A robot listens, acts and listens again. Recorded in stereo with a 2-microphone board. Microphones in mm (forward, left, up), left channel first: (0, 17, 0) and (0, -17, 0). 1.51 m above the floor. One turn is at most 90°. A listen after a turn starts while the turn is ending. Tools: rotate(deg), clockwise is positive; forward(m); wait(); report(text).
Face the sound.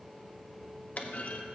rotate(-50)
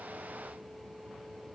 wait()
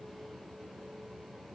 report("I heard a clunk, but can't make it out now. It was about straight ahead or 80° left.")